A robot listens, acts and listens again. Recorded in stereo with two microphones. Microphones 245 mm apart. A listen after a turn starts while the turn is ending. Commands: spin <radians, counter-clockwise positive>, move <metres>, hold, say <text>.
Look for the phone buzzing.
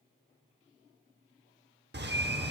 hold
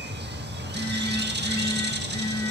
spin 1.57
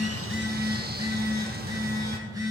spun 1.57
spin -0.26
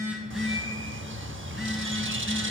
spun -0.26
say Facing the phone buzzing.